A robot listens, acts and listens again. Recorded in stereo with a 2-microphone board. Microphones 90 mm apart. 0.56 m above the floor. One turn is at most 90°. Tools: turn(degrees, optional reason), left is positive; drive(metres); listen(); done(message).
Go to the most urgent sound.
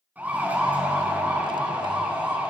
turn(degrees=-20, reason="The siren: about 20° right or 160° right.")
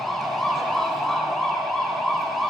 drive(metres=1.0)
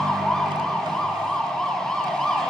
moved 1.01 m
drive(metres=1.0)
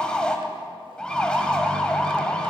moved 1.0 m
turn(degrees=10, reason="The siren is now 10° left.")
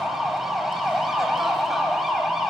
drive(metres=1.0)
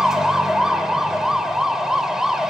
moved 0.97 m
drive(metres=1.0)
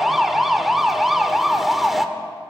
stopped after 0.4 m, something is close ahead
done("Arrived at the siren, straight ahead.")